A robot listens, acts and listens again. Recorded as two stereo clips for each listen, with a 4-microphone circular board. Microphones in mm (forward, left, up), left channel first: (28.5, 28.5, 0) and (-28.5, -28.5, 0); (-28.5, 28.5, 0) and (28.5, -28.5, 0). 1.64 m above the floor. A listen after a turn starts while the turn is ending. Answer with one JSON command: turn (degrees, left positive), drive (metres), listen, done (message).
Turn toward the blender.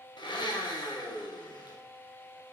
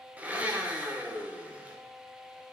{"turn": 25}
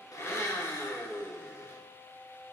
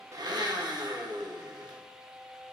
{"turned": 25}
{"turn": -15}
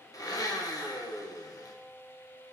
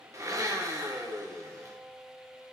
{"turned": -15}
{"done": "Facing the blender, 1 to 2 m away."}